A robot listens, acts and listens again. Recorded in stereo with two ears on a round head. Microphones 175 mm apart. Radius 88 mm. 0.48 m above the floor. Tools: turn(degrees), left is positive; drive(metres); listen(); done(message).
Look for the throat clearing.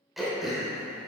turn(degrees=30)
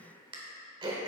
turn(degrees=-30)
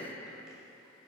listen()
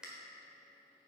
done("Facing the throat clearing.")